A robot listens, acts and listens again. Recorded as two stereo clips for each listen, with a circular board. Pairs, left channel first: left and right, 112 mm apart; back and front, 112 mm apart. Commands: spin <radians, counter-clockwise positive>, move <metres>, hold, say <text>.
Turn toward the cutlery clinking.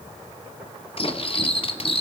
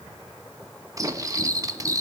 spin 1.05
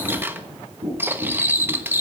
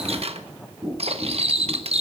spin -0.35
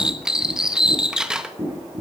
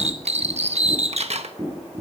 say Found it: cutlery clinking, straight ahead, 1 to 2 m away.